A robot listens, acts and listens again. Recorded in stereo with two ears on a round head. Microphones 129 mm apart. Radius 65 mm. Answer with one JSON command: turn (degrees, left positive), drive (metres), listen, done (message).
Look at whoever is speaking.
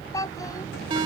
{"turn": 25}
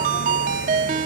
{"listen": true}
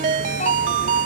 {"listen": true}
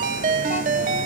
{"done": "I heard a child speaking, but can't make it out now. It was about straight ahead or 130° left."}